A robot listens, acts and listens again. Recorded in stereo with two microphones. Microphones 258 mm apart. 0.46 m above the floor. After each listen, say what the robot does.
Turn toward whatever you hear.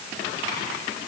Keep listening.
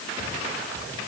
Keep listening.
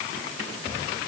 I can't make out anything to turn to.